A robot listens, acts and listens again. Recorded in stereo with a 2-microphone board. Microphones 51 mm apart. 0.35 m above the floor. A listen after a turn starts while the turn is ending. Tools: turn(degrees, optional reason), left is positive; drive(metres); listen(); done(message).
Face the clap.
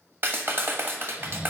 turn(degrees=-50, reason="The clap: about 50° right or 130° right.")
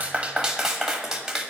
turn(degrees=-15, reason="So it is at 15° right.")
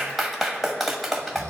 done("Found it: a clap, straight ahead, 1 to 2 m away.")